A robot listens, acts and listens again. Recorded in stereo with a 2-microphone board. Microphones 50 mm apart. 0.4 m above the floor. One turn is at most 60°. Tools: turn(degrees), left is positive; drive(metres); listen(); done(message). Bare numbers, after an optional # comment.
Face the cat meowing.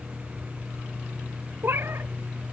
# The cat meowing: about 55° right or 125° right.
turn(-55)
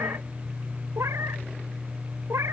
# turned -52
# So it is at 70° right.
turn(-60)
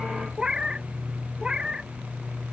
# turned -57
# The cat meowing is now 15° right.
turn(-15)
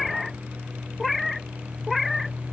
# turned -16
done("Found it: a cat meowing, straight ahead.")